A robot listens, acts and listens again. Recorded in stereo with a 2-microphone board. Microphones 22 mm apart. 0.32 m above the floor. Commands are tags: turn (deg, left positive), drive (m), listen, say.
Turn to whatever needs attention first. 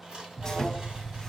<turn deg="-60"/>
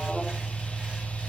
<turn deg="-35"/>
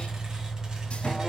<say>Found it: an alarm, straight ahead.</say>